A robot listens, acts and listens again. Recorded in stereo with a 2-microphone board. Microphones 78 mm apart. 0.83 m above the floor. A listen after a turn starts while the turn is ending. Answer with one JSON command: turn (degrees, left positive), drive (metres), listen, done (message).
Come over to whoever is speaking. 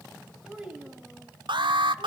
{"turn": -30}
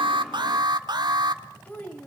{"turn": 20}
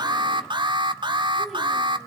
{"listen": true}
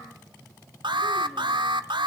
{"listen": true}
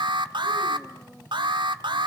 {"done": "Facing where the child speaking came from. I can't hear it now. I did not reach it."}